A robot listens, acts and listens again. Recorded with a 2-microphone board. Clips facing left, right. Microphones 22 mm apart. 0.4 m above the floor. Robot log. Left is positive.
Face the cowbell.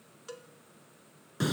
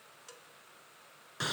note: The cowbell: about 15° left or 165° left.
cmd yaw +15
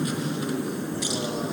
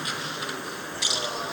cmd idle
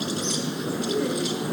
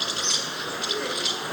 cmd idle
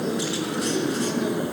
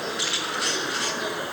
end: I heard a cowbell, but can't make it out now. It was about straight ahead or 150° left.